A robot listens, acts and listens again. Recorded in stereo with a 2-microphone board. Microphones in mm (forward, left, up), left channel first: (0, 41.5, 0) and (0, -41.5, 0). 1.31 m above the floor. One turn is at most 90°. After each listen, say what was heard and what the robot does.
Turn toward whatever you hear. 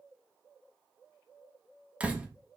Turn 30° right.
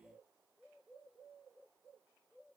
Keep listening.
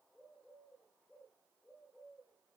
I heard a door slam, but can't make it out now. It was about 15° left or 135° right.